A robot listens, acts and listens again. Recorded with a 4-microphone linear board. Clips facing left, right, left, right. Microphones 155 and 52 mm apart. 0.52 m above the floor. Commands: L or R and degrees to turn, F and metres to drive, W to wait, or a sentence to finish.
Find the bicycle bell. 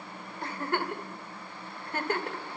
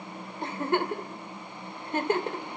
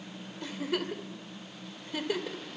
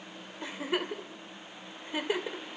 W
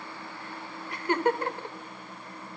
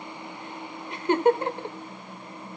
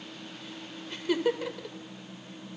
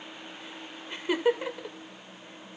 W
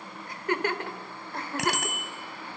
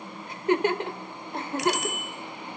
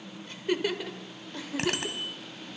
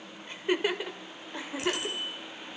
L90
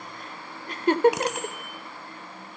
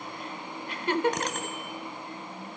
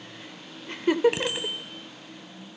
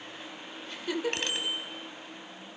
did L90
L10
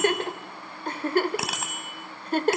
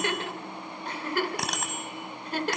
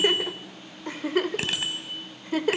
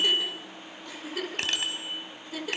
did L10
Facing the bicycle bell, 2 to 4 m away.